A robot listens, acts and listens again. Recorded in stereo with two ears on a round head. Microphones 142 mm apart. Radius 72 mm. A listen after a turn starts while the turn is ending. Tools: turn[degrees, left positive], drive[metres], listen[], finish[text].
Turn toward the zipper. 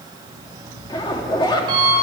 Thought: The zipper: about 30° left or 150° left.
Action: turn[30]
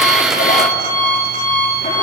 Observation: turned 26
Action: listen[]
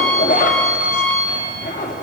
Thought: So it is at 125° left.
Action: turn[125]
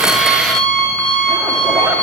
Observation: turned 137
Thought: Nothing new. It was at 15° right.
Action: turn[-15]
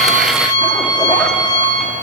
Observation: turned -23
Thought: Nothing new. It was at 10° left.
Action: turn[10]
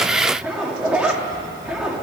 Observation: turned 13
Action: finish[Found it: a zipper, straight ahead, 2 to 4 m away.]